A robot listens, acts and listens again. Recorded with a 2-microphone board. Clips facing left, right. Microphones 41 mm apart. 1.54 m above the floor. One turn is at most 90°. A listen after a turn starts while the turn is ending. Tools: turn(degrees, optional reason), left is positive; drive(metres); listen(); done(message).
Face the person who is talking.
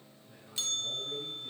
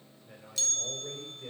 turn(degrees=-65, reason="The man speaking: about 65° right or 115° right.")
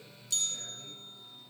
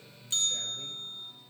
listen()
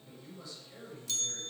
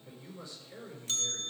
turn(degrees=-45, reason="So it is at 45° right.")
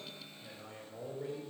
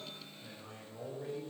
turn(degrees=-10, reason="The man speaking is now 10° right.")
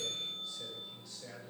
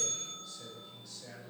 done("Found it: a man speaking, straight ahead.")